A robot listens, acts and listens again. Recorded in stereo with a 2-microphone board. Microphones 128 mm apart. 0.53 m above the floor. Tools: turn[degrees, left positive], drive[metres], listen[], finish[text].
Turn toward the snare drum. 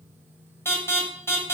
Action: listen[]
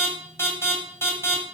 Action: listen[]
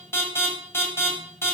Action: finish[I can't make out a snare drum to turn to.]